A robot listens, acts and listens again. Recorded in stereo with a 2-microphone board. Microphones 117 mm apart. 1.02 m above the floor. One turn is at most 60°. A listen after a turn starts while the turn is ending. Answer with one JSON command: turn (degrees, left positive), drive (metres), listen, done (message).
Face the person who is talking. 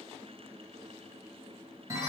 {"listen": true}
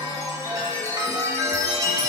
{"listen": true}
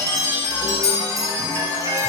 {"done": "I can't make out anyone speaking, only a chime."}